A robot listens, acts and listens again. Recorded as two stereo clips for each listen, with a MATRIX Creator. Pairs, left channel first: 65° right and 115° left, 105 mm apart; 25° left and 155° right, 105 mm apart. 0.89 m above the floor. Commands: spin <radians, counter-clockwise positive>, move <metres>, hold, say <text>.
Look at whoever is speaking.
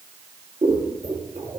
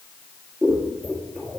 hold
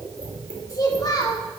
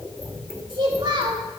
spin -2.09
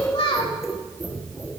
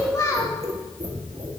spin -0.61
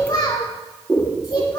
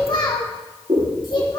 spin -0.35
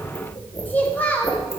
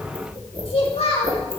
say Facing the child speaking.